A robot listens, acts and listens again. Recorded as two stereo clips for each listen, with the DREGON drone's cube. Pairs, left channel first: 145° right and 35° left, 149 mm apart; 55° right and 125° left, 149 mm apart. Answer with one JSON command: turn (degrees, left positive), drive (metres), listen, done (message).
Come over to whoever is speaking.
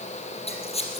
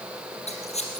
{"listen": true}
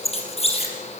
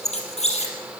{"listen": true}
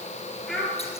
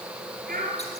{"turn": 125}
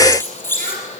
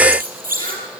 {"listen": true}
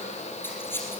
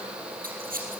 {"listen": true}
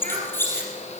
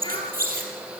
{"done": "Facing where the child speaking came from. I can't hear it now. I did not reach it."}